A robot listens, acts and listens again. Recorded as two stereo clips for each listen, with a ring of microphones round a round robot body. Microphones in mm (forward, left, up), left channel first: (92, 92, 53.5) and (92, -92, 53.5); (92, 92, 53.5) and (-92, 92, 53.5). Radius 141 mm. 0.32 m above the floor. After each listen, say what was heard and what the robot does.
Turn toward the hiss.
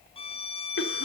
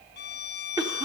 Keep listening.
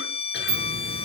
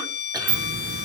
The hiss: 145° right. Turn 145° right.
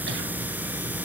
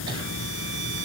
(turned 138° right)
The hiss is now 10° right. Turn 10° right.
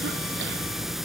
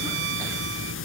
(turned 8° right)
Found it: a hiss, straight ahead, under 1 m away.